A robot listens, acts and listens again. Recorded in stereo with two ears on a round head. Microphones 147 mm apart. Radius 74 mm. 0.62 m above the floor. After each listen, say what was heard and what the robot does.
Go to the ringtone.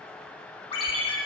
The ringtone: about 35° left or 145° left. Turn 35° left.
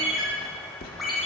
Drive 1.0 m forward.
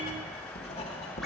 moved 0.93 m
Keep listening.
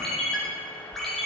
Drive 1.0 m forward.
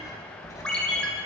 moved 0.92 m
Drive 1.0 m forward.
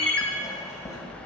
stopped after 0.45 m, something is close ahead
The ringtone is now 10° left. Turn 10° left.
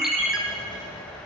Arrived at the ringtone, straight ahead.